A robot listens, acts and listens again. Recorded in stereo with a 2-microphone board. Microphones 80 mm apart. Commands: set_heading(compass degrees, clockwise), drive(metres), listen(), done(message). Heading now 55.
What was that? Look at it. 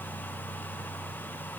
listen()
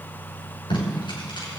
set_heading(325)
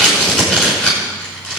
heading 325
set_heading(310)
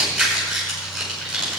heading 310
done("Facing the tape being pulled, over 4 m away.")